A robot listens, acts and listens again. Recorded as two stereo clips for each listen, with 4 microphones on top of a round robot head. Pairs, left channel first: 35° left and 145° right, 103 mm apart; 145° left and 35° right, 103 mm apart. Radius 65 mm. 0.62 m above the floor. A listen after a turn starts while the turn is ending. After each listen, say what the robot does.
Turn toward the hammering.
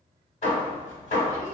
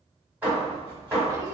Turn 40° left.
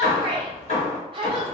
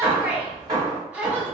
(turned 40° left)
Turn 20° left.
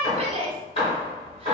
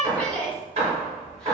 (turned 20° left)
Facing the hammering.